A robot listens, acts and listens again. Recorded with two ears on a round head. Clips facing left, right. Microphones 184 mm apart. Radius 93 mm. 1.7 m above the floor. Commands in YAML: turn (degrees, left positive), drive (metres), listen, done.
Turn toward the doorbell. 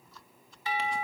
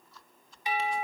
turn: -15
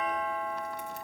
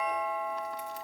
done: "Facing the doorbell."